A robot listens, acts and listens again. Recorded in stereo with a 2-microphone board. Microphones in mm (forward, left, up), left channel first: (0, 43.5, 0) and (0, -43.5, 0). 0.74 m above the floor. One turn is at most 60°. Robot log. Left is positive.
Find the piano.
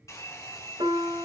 note: The piano: about 70° right or 110° right.
cmd yaw -60
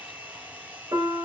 note: So it is at 50° right.
cmd yaw -50
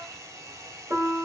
note: The piano is now 30° right.
cmd yaw -30
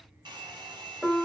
end: Found it: a piano, straight ahead, 1 to 2 m away.